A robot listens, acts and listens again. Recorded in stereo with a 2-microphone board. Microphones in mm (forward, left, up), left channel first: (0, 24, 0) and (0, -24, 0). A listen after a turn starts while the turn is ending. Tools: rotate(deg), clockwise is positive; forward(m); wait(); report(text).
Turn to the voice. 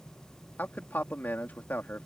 rotate(-40)
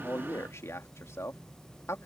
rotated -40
rotate(-95)
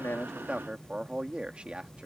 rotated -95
rotate(25)
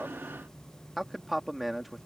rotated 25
report("Found it: a man speaking, straight ahead.")